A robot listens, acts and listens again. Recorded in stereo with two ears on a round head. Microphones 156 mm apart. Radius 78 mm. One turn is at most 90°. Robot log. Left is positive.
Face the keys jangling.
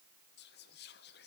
cmd idle
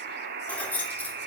cmd yaw +30
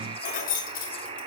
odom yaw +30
note: So it is at 125° left.
cmd yaw +90
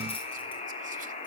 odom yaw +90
note: Nothing new. It was at 35° left.
cmd yaw +35
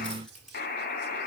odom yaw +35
cmd idle
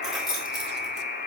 end: Facing the keys jangling.